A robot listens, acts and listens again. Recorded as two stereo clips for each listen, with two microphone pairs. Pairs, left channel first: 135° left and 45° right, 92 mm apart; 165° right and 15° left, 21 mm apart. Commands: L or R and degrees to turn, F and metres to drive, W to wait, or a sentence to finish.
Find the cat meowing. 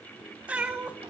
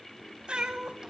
L25
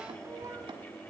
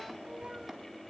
Facing the cat meowing, 1 to 2 m away.